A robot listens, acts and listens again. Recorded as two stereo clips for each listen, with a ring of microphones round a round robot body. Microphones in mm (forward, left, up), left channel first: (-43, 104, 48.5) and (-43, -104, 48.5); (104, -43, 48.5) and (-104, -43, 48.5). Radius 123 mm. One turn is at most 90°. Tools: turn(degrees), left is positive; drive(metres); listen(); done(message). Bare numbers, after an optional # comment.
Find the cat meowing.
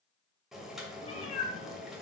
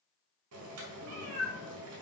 # The cat meowing: 150° left.
turn(90)
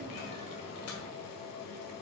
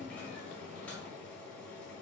# The cat meowing is now 50° left.
turn(50)
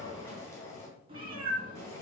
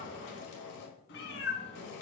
# The cat meowing is now 20° right.
turn(-20)
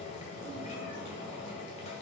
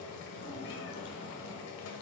listen()
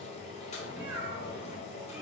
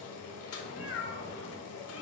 done("Found it: a cat meowing, straight ahead.")